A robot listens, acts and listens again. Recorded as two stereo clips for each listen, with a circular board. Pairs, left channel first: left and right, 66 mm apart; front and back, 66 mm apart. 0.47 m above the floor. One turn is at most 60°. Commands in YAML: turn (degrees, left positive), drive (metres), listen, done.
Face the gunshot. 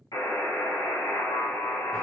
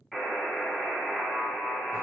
listen: true
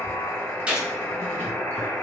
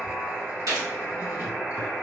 turn: -60
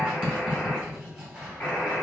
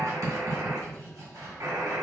turn: -60
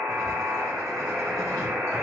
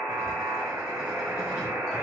turn: -40
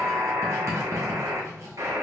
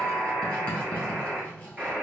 done: "I heard a gunshot from this way, but can't make it out now."